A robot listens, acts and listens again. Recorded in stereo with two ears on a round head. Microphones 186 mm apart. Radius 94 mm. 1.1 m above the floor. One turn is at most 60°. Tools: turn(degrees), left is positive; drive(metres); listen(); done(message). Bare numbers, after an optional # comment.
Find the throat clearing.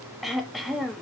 turn(30)
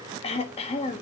# So it is at 150° left.
turn(60)
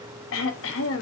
# The throat clearing is now 110° left.
turn(60)
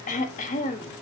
# The throat clearing is now 35° left.
turn(35)
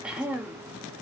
done("Facing the throat clearing, 1 to 2 m away.")